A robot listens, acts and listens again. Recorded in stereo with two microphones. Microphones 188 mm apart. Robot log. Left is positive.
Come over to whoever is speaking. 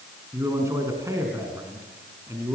note: The man speaking: about 15° right or 165° right.
cmd yaw -15
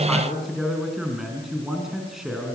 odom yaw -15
cmd fwd 1.0
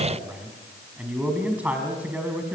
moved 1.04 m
note: The man speaking is now 10° right.
cmd yaw -10
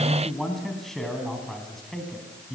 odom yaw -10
cmd fwd 1.0
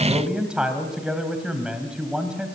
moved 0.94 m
cmd fwd 1.0
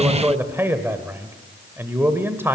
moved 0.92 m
note: The man speaking is now 15° right.
cmd yaw -15
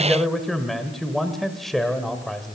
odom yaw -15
cmd fwd 1.0
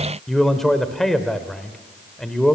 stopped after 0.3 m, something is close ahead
end: Arrived at the man speaking, straight ahead.